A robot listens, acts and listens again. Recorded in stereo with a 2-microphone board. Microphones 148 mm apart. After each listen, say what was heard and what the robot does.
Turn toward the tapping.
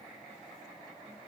Keep listening.
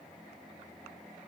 Keep listening.
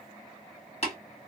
The tapping: about 45° left or 135° left. Turn 45° left.
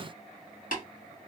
So it is at 90° left. Turn 90° left.
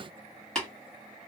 Facing the tapping.